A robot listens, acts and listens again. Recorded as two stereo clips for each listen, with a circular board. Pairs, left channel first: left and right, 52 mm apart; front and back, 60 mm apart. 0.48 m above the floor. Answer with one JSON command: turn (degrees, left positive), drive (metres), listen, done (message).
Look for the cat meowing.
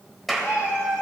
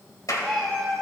{"turn": 85}
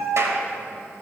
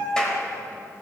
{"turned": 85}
{"done": "Facing the cat meowing, 2 to 4 m away."}